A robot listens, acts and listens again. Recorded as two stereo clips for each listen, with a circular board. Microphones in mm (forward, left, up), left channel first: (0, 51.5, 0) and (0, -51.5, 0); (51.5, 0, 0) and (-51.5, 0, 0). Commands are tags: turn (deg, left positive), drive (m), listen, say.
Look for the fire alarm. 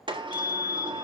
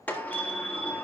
<turn deg="-155"/>
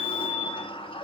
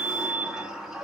<turn deg="10"/>
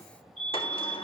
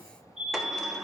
<say>Found it: a fire alarm, straight ahead, over 4 m away.</say>